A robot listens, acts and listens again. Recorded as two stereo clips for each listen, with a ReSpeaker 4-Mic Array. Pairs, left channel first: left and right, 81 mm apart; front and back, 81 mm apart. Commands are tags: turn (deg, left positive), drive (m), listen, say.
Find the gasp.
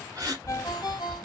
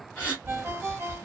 <turn deg="-65"/>
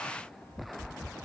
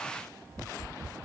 <say>Facing where the gasp came from. I can't hear it now.</say>